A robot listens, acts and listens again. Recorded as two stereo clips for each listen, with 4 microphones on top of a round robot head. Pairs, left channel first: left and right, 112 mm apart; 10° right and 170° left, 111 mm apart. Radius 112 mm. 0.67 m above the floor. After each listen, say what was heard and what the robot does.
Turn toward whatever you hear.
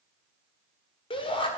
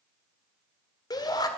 The shout: 45° left. Turn 45° left.
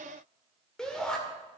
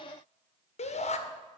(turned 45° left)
Facing the shout, 1 to 2 m away.